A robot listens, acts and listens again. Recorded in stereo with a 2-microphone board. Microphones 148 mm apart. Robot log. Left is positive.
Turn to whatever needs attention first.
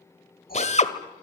cmd idle
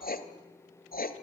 cmd idle
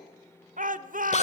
note: The shout: about 60° right or 120° right.
cmd yaw -60
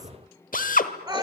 note: So it is at 25° right.
cmd yaw -25
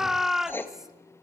end: Found it: a shout, straight ahead.